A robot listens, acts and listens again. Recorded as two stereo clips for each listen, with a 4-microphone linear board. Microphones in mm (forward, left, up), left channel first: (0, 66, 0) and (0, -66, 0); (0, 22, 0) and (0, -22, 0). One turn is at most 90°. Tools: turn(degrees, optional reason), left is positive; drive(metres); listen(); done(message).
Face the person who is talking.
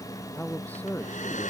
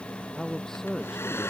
turn(degrees=30)
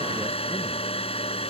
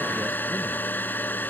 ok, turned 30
listen()
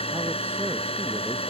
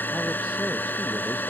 listen()
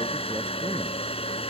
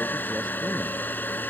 done("I heard a man speaking, but can't make it out now. It was about 20° right or 140° left.")